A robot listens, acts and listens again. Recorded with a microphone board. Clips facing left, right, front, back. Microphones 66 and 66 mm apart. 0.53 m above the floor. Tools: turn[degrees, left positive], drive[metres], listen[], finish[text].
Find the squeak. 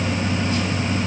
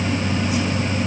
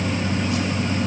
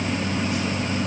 Action: listen[]
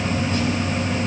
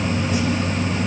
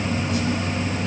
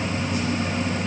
Action: listen[]
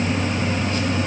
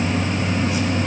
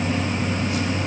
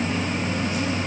Action: finish[I can't make out a squeak.]